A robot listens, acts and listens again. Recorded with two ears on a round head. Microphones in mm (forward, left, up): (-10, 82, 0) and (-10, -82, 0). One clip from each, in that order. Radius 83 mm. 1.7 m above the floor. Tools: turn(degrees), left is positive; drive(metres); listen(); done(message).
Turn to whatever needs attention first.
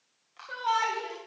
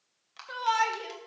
turn(degrees=-35)
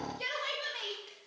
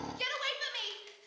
turn(degrees=-105)
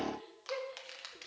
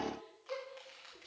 turn(degrees=10)
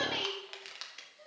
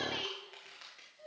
done("Facing the shout, 1 to 2 m away.")